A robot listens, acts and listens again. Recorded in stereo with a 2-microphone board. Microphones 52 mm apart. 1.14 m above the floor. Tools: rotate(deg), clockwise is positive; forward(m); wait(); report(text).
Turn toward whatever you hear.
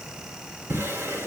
rotate(50)
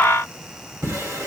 rotate(80)
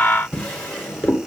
rotate(-15)
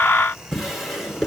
report("Facing the drawer.")